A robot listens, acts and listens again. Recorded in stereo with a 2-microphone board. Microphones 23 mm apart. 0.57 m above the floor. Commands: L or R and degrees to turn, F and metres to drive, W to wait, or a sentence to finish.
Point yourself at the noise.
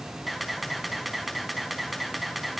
R30
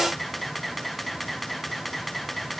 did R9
L30
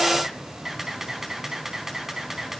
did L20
R15
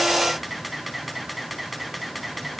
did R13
Facing the camera shutter, over 4 m away.